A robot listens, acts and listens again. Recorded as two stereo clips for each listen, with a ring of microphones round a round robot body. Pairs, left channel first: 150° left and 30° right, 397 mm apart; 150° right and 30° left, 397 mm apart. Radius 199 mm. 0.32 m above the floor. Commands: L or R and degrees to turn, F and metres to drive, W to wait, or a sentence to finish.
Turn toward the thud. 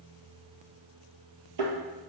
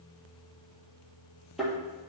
R60
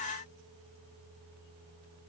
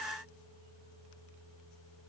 Facing where the thud came from. I can't hear it now.